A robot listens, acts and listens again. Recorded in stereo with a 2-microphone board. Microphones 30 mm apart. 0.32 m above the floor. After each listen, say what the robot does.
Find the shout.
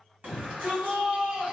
Turn 60° right.
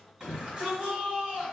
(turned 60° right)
Turn 35° right.
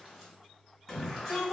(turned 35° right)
Facing the shout, 1 to 2 m away.